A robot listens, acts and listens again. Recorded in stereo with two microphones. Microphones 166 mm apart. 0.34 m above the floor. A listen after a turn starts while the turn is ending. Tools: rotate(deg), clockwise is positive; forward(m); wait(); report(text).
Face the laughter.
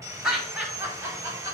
rotate(20)
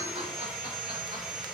wait()
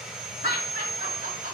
rotate(120)
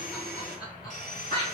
rotate(-30)
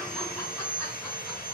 wait()
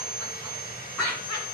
report("Facing the laughter, 2 to 4 m away.")